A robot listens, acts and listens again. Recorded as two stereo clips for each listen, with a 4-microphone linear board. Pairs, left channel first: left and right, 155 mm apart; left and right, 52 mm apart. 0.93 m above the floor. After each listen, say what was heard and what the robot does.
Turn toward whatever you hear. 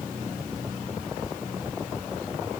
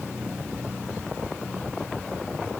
Keep listening.
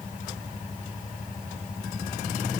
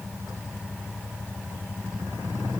Keep listening.
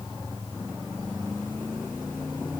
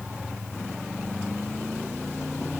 I can't make out anything.